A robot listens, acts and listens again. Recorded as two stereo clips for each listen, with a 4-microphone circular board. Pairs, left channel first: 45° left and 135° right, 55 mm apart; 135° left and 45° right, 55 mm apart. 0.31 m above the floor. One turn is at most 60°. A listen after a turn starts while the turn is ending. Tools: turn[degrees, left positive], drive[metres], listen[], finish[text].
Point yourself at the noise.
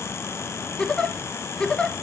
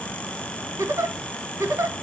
Thought: The giggle: 30° right.
Action: turn[-30]
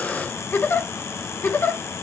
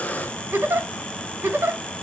Action: finish[Found it: a giggle, straight ahead.]